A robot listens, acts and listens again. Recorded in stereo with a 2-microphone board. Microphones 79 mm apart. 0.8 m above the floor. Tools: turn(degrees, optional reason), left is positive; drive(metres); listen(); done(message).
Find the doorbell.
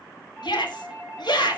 turn(degrees=30)
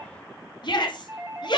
turn(degrees=-25, reason="So it is at 25° right.")
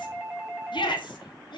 turn(degrees=-10, reason="The doorbell is now 10° right.")
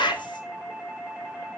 done("Facing the doorbell, over 4 m away.")